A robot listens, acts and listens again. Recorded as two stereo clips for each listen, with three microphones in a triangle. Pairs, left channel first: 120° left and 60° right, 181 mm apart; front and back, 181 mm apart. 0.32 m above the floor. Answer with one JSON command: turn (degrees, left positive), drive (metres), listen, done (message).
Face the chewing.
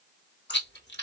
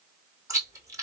{"turn": 105}
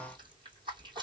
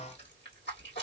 {"done": "Found it: chewing, straight ahead."}